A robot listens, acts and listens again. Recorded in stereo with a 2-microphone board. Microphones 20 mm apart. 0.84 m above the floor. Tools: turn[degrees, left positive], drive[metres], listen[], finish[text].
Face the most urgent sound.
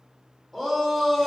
Action: turn[30]
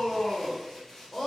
Thought: So it is at 145° left.
Action: turn[145]
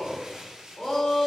Thought: The shout is now 65° left.
Action: turn[65]
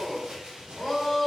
Action: finish[Found it: a shout, straight ahead.]